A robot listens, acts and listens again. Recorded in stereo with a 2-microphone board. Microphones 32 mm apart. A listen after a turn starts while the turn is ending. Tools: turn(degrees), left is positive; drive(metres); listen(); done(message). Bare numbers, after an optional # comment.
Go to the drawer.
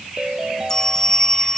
listen()
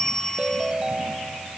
listen()
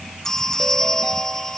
done("I can't make out a drawer to turn to.")